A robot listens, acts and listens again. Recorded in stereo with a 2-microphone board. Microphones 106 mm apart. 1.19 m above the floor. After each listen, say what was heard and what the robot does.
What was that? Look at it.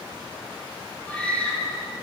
Turn 30° left.
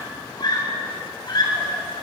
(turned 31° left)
So it is at 135° left. Turn 135° left.
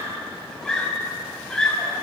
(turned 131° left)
Facing the scream, over 4 m away.